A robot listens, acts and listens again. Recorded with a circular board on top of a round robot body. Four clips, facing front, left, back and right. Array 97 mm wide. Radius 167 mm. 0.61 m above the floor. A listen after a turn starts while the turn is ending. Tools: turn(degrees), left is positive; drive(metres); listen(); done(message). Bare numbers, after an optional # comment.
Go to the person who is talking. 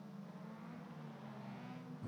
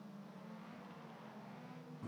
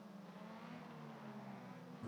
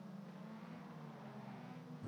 listen()
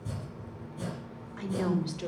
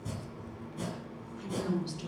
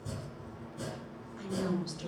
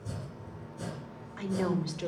# The woman speaking: 60° right.
turn(-60)
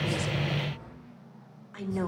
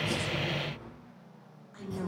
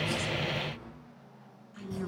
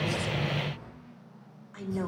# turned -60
# The woman speaking is now 20° right.
turn(-20)
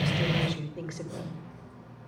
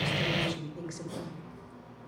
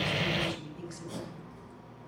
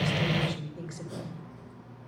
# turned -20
drive(1.0)
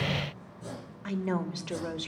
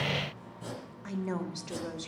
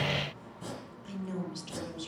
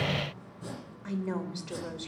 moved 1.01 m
drive(1.0)
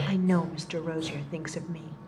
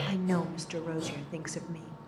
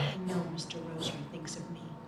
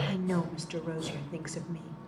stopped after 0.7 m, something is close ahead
# The woman speaking is now 15° left.
turn(15)
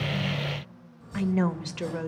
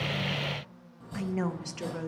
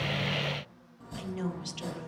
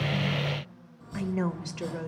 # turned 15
done("I am next to the woman speaking.")